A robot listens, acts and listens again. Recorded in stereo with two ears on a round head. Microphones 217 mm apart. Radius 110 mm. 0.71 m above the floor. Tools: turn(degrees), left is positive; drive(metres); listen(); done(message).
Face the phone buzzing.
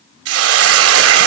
listen()
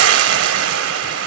listen()
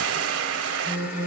turn(degrees=-40)
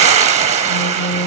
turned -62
turn(degrees=20)
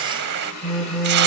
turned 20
done("Facing the phone buzzing.")